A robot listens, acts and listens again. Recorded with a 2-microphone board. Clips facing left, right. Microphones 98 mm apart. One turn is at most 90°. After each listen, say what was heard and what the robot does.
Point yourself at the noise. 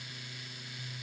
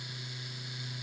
Keep listening.
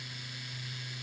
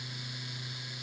Keep listening.
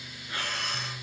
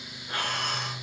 The breathing: about 60° right or 120° right. Turn 60° right.
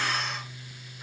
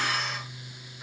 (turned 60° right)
Facing the breathing, 2 to 4 m away.